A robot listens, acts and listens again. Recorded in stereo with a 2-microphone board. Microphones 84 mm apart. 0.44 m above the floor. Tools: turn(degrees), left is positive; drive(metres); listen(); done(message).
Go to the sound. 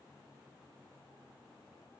listen()
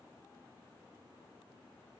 listen()
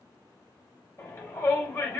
turn(degrees=20)
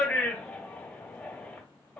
drive(metres=1.0)
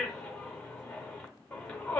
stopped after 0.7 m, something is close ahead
turn(degrees=15)
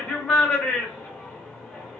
done("I am next to the shout.")